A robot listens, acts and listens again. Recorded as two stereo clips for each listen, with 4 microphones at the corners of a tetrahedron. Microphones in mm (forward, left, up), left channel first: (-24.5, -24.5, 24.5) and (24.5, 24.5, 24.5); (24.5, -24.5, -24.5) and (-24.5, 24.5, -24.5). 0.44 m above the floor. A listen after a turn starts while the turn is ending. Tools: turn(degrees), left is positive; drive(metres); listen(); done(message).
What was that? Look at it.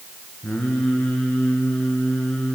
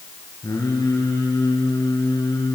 turn(degrees=-60)
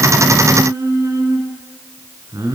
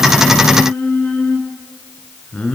turn(degrees=25)
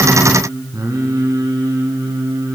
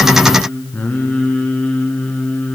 turn(degrees=25)
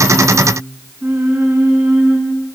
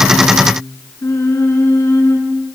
done("Facing the singing.")